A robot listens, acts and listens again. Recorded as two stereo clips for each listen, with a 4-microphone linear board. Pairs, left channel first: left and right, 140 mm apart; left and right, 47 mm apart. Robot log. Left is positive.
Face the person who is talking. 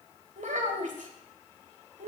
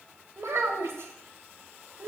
note: The child speaking: about 65° right or 115° right.
cmd yaw -65
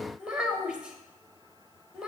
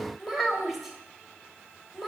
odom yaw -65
end: Found it: a child speaking, straight ahead.